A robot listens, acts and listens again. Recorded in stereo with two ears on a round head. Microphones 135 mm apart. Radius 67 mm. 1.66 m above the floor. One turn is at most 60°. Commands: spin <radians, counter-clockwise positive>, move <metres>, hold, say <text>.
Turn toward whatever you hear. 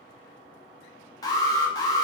spin 0.44
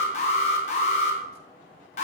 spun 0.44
spin 1.05
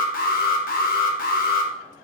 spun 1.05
spin 1.05
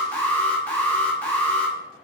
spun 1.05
spin 0.17
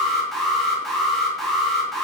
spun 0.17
say Facing the alarm, under 1 m away.